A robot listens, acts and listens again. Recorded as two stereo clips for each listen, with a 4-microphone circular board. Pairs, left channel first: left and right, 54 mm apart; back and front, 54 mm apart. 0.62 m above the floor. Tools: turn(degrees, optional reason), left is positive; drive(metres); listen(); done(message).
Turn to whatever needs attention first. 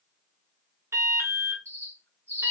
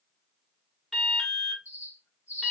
turn(degrees=-100, reason="The alarm: 100° right.")
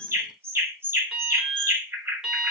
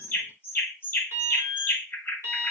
turn(degrees=-15, reason="The alarm is now 15° right.")
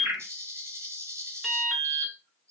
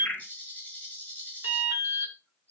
done("Found it: an alarm, straight ahead.")